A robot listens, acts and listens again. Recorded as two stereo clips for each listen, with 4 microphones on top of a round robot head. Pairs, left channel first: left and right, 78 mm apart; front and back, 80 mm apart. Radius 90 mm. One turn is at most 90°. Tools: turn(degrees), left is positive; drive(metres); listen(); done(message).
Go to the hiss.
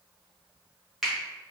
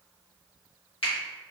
listen()
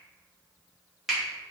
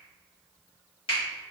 listen()
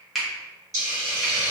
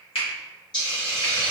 turn(degrees=-50)
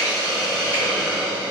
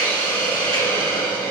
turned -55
drive(metres=1.0)
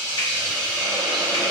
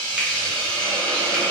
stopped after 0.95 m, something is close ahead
turn(degrees=10)
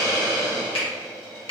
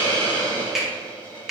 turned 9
done("I am next to the hiss.")